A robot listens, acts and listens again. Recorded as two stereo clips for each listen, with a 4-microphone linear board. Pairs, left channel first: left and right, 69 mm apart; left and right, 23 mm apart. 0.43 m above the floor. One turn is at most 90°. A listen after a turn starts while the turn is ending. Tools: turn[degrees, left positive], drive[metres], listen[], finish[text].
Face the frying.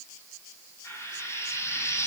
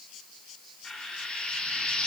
Thought: The frying: about 45° left or 135° left.
Action: turn[45]
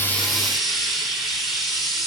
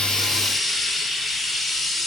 Action: finish[Facing the frying, over 4 m away.]